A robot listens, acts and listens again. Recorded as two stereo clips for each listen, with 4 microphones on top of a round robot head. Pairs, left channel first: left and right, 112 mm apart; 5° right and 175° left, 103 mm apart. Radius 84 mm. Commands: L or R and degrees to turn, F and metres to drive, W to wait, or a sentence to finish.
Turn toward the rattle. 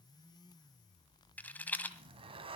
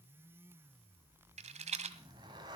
L165
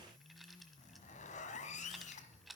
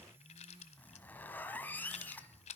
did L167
Facing the rattle.